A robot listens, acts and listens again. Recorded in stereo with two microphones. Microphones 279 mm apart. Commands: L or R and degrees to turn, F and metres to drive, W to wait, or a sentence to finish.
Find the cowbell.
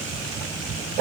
W
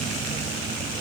W
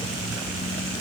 I can't make out a cowbell to turn to.